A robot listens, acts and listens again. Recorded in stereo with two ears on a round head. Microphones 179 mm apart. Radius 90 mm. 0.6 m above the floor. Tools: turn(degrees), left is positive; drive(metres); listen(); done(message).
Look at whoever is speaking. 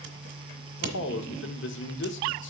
turn(degrees=65)
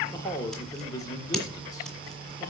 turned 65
turn(degrees=20)
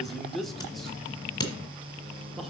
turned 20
done("Found it: a man speaking, straight ahead, 1 to 2 m away.")